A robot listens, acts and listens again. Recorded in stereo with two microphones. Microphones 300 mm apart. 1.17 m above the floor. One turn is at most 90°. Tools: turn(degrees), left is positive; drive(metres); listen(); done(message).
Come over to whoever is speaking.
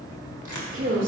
turn(degrees=-40)
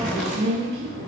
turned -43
turn(degrees=-90)
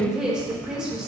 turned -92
drive(metres=1.0)
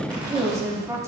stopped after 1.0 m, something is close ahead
turn(degrees=-10)
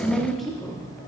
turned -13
done("I am next to the woman speaking.")